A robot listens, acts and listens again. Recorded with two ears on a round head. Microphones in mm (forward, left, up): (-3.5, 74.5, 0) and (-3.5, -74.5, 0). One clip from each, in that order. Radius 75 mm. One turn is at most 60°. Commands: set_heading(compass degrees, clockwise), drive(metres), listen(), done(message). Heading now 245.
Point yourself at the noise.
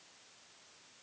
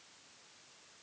listen()
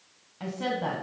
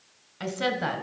set_heading(300)
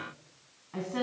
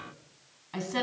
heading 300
set_heading(0)
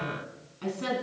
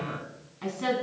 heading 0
set_heading(15)
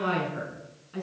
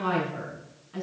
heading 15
done("Found it: a woman speaking, straight ahead.")